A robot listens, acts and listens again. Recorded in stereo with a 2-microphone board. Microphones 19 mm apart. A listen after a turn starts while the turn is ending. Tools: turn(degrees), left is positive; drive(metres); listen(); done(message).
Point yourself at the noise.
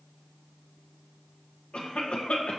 turn(degrees=90)
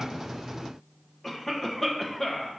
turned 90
turn(degrees=10)
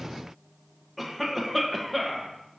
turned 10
done("Facing the cough.")